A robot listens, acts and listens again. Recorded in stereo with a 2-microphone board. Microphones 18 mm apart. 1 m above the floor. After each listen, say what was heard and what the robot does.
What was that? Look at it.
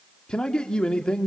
The man speaking: about 60° left or 120° left. Turn 60° left.
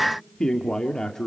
So it is at 35° left. Turn 35° left.
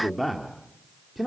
Facing the man speaking, 2 to 4 m away.